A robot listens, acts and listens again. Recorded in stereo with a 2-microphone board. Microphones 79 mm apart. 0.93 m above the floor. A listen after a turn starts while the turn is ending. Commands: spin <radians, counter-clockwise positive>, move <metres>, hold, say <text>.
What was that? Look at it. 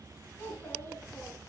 spin 0.44
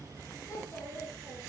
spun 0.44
spin 2.36
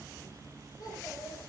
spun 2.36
spin 1.13
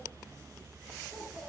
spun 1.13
say Found it: a child speaking, straight ahead, over 4 m away.